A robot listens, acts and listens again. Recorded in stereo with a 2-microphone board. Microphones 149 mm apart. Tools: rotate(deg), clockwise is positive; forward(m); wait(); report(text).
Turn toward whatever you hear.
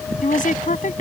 rotate(-60)
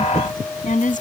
rotate(-60)
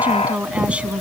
report("Facing the woman speaking.")